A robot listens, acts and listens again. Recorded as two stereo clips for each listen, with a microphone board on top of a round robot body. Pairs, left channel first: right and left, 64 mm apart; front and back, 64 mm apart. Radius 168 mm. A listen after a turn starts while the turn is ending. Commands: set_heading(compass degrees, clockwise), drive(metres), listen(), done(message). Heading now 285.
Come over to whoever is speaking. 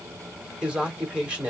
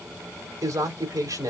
set_heading(120)
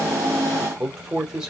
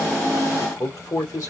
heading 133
set_heading(118)
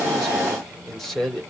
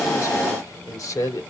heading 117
drive(1.0)
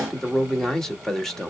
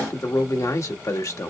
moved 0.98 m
set_heading(127)
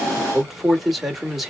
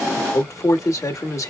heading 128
drive(1.0)
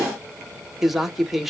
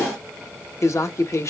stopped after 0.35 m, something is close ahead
done("I am next to the man speaking.")